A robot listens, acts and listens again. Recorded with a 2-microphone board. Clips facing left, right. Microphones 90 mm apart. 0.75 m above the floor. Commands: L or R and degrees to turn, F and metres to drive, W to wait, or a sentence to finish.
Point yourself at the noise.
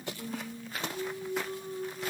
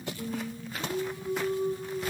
R50
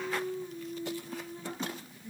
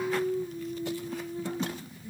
Found it: singing, straight ahead.